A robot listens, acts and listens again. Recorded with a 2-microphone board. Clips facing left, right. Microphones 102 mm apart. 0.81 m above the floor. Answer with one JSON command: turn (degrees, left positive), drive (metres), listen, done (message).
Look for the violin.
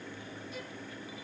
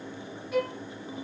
{"turn": -75}
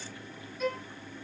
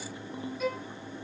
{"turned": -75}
{"done": "Facing the violin."}